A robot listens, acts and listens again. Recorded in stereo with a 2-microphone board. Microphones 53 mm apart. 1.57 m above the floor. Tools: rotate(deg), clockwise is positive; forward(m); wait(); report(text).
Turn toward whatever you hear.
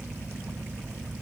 wait()
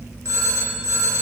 rotate(70)
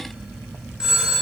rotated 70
rotate(15)
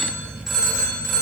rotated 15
report("Facing the phone ringing.")